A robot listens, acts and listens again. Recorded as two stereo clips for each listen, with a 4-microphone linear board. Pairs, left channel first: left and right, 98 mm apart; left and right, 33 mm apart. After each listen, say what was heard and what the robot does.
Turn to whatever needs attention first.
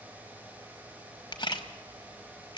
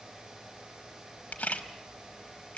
Keep listening.
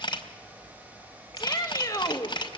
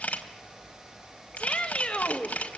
The shout: about 35° left or 145° left. Turn 35° left.
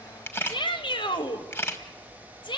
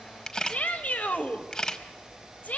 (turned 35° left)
So it is at 100° left. Turn 100° left.
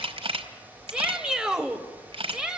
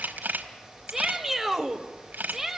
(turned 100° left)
The shout is now 10° right. Turn 10° right.
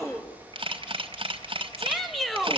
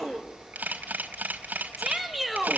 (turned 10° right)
Facing the shout.